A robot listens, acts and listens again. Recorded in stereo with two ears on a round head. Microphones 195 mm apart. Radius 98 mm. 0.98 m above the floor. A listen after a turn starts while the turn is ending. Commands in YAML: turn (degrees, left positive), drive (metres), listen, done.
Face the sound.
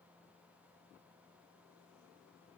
listen: true
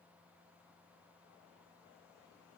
listen: true
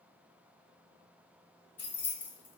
turn: 30
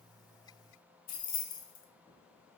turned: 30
turn: 140
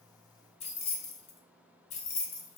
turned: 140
turn: 35
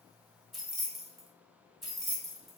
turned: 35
done: "Facing the keys jangling, under 1 m away."